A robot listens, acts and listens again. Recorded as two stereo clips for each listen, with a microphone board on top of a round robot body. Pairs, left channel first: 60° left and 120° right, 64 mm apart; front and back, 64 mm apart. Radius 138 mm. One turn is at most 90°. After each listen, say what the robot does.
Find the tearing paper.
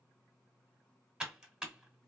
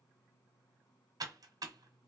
Keep listening.
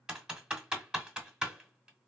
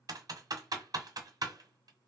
Keep listening.
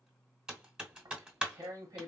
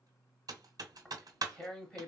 Turn 80° right.
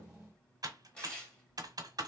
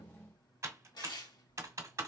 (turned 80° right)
Turn 20° right.
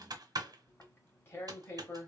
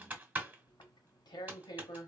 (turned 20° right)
Facing the tearing paper.